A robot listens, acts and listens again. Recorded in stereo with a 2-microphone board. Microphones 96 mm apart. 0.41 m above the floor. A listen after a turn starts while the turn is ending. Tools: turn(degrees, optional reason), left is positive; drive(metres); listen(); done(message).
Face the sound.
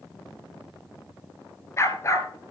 turn(degrees=35, reason="The dog barking: about 35° left or 145° left.")
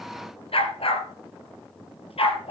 turn(degrees=95, reason="So it is at 95° left.")
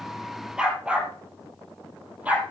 turn(degrees=-15, reason="The dog barking is now 15° right.")
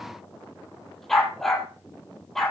done("Found it: a dog barking, straight ahead.")